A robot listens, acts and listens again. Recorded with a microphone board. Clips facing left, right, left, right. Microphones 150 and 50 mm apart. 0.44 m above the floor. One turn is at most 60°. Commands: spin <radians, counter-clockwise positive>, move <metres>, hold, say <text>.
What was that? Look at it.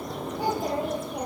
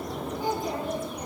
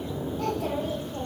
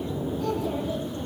spin 1.05
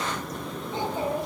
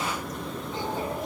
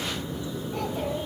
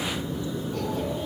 spin 0.44
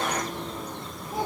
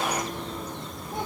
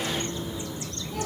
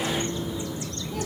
hold
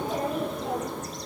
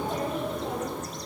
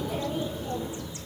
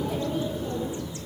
say Found it: a child speaking, straight ahead.